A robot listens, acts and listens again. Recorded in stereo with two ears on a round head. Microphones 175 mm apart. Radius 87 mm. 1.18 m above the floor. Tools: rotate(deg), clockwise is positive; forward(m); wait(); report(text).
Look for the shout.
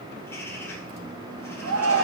rotate(90)
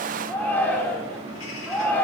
rotate(-10)
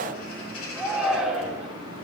report("Found it: a shout, straight ahead, 2 to 4 m away.")